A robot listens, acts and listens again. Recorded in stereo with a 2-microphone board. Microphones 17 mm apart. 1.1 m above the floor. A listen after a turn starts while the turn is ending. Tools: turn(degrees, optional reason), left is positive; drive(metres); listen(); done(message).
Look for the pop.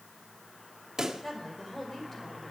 turn(degrees=-40, reason="The pop: about 40° right or 140° right.")
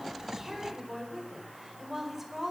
listen()
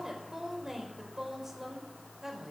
done("I heard a pop, but can't make it out now. It was about straight ahead or 100° right.")